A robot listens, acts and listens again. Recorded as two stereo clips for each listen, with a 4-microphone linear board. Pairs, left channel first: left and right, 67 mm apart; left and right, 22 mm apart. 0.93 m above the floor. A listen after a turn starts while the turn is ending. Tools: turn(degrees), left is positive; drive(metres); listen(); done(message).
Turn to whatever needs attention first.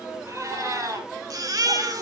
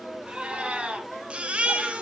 turn(degrees=-60)
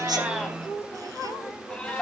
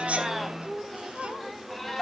listen()
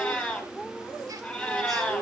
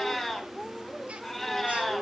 listen()
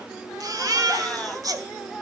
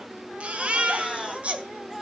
turn(degrees=-60)
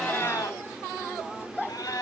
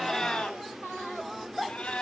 listen()
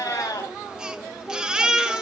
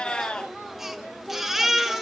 turn(degrees=-10)
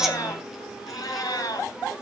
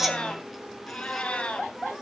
listen()
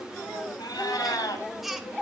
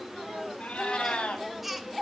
done("Facing the baby crying, 1 to 2 m away.")